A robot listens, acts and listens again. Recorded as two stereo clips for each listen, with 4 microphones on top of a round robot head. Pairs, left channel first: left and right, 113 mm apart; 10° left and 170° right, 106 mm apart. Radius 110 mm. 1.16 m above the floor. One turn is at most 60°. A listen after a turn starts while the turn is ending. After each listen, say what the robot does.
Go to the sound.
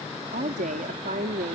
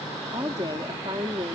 Turn 60° right.
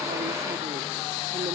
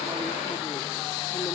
Turn 50° right.
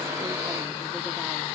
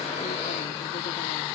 Keep listening.
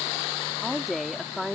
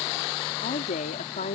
Drive 1.0 m forward.
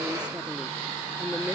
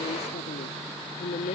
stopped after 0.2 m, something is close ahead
Something is in my way. I am facing the woman speaking but have not reached it.